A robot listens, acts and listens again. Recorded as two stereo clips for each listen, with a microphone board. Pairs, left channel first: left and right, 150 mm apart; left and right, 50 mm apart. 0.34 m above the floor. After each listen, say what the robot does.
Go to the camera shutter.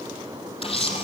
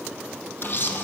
Turn 40° left.
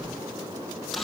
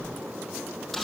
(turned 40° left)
Drive 1.0 m forward.
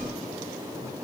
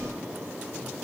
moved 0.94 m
Keep listening.
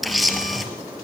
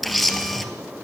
Drive 1.0 m forward.
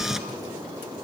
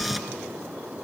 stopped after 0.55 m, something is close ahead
Arrived at the camera shutter, straight ahead.